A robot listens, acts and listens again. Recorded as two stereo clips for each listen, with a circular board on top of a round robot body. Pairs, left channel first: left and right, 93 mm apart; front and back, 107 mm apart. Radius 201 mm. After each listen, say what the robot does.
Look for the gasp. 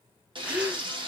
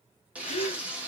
Turn 15° right.
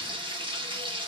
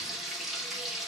I heard a gasp from this way, but can't make it out now.